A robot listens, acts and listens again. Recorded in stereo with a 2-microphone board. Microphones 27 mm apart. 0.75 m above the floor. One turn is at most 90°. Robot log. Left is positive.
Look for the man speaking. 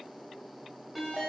cmd idle
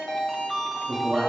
note: The man speaking: about 40° right or 140° right.
cmd yaw -40
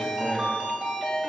cmd idle
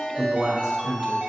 note: So it is at 10° right.
cmd yaw -10
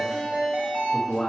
note: The man speaking is now 20° left.
cmd yaw +20
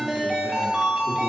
note: The man speaking is now 10° left.
cmd yaw +10
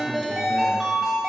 cmd idle
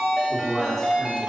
end: Found it: a man speaking, straight ahead, 1 to 2 m away.